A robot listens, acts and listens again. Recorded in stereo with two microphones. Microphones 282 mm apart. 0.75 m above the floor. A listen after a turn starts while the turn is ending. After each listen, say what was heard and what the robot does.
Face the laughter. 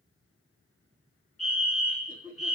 The laughter: about 35° left or 145° left. Turn 35° left.
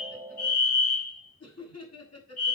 So it is at 110° left. Turn 110° left.
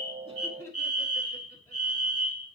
The laughter is now 10° left. Turn 10° left.
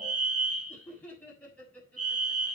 Facing the laughter.